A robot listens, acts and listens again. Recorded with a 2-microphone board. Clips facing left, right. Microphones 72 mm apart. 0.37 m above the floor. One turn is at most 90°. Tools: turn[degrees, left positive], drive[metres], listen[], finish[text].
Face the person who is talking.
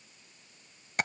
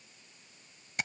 Action: listen[]
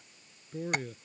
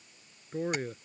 Thought: The man speaking: about 40° right or 140° right.
Action: turn[-40]
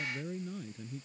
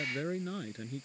Thought: So it is at 100° right.
Action: turn[-90]
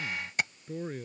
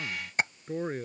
Thought: The man speaking is now 45° right.
Action: turn[-45]
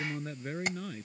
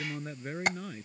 Thought: The man speaking is now 10° right.
Action: turn[-10]
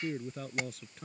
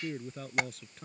Action: finish[Found it: a man speaking, straight ahead.]